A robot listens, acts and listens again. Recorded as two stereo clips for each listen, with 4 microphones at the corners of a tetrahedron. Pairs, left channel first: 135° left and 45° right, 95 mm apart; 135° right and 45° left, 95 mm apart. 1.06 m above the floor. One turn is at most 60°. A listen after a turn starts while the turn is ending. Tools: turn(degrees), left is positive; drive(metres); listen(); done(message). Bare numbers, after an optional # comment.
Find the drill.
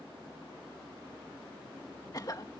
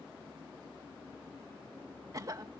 listen()
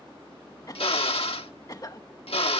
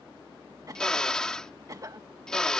# The drill: 145° left.
turn(60)
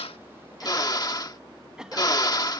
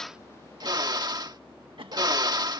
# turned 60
# The drill is now 90° left.
turn(60)
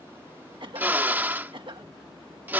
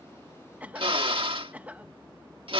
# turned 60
# The drill is now 25° left.
turn(25)
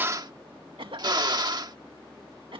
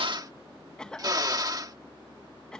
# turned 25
done("Facing the drill.")